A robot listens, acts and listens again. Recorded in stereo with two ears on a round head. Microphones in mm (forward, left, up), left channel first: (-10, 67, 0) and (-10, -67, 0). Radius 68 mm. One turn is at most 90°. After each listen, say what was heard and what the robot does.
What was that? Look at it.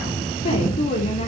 The woman speaking: about 45° left or 135° left. Turn 45° left.
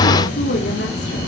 So it is at 100° left. Turn 90° left.
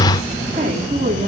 The woman speaking is now 50° right. Turn 50° right.
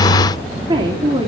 The woman speaking is now 30° right. Turn 30° right.
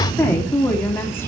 The woman speaking is now 15° left. Turn 15° left.
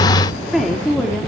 Found it: a woman speaking, straight ahead, 2 to 4 m away.